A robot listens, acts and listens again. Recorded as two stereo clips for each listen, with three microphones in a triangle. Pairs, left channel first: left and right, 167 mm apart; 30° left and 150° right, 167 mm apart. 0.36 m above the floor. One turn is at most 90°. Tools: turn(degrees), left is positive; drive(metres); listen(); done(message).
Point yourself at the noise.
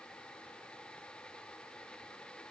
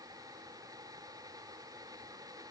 listen()
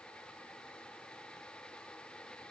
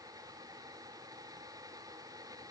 listen()
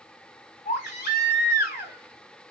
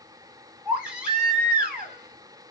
turn(degrees=90)
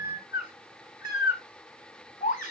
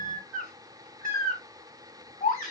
turn(degrees=55)
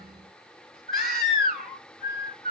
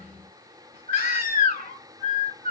done("Facing the baby crying, 1 to 2 m away.")